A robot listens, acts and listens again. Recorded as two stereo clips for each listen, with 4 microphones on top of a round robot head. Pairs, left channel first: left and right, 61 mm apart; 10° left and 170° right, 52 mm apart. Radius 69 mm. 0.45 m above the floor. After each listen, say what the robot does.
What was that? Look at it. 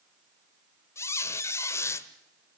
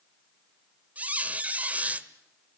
Turn 135° left.
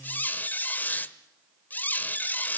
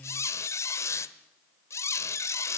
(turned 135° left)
Turn 30° left.
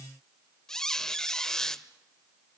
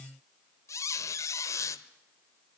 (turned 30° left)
Turn 10° left.
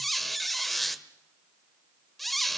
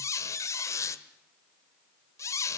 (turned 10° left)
Facing the squeak, 1 to 2 m away.